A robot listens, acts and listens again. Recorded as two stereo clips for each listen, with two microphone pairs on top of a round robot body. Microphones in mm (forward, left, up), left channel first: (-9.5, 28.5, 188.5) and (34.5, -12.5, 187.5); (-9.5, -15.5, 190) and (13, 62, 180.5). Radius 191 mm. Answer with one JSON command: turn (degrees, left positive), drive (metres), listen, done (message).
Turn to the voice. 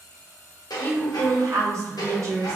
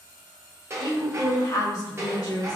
{"turn": -65}
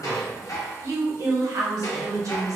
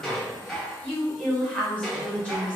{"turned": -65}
{"turn": -30}
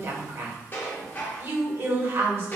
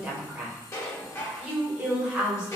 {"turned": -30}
{"done": "Facing the woman speaking."}